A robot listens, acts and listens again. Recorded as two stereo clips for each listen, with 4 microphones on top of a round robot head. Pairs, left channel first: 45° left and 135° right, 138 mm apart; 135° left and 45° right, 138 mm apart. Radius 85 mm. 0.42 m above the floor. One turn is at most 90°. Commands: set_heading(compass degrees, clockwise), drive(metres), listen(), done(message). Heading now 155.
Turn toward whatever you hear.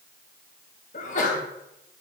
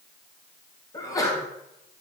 set_heading(85)
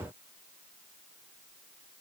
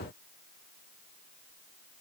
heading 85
done("Facing where the sneeze came from. I can't hear it now.")